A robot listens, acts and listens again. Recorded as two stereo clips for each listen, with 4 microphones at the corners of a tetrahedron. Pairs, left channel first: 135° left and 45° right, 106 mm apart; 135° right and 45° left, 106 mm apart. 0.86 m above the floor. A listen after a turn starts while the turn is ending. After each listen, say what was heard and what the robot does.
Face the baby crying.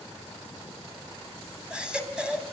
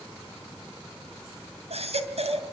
The baby crying: 35° left. Turn 35° left.
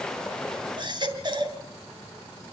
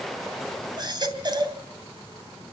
Found it: a baby crying, straight ahead, 2 to 4 m away.